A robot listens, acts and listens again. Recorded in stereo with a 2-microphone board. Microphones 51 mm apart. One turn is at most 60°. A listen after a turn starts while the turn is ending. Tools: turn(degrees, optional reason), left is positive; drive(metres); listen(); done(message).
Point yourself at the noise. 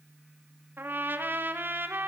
turn(degrees=-40, reason="The trumpet: about 40° right or 140° right.")
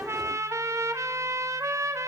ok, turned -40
turn(degrees=-60, reason="So it is at 100° right.")
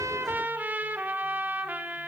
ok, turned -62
turn(degrees=-35, reason="The trumpet is now 35° right.")
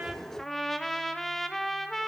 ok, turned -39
done("Found it: a trumpet, straight ahead.")